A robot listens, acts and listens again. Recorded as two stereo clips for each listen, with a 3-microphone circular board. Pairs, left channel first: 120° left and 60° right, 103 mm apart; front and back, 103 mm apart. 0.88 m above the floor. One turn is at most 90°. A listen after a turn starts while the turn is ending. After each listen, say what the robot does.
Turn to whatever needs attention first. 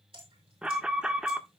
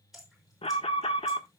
Turn 20° left.
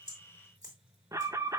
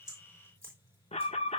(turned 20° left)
Facing the alarm.